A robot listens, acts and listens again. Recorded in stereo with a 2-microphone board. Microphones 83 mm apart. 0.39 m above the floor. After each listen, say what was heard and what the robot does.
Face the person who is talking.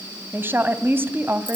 The woman speaking: about 25° right or 155° right. Turn 25° right.
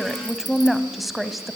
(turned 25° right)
Found it: a woman speaking, straight ahead, 1 to 2 m away.